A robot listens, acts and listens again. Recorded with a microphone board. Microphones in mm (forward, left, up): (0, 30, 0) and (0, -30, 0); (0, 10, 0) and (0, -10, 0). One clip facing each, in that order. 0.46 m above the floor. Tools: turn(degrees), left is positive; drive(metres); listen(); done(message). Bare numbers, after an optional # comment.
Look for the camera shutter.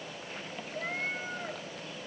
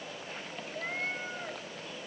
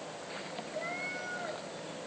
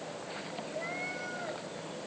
listen()
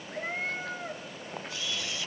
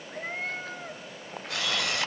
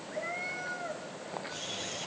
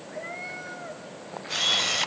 # The camera shutter: about 70° right or 110° right.
turn(-70)
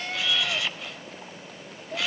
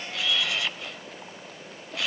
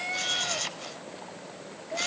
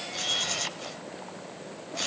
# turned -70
done("Facing the camera shutter.")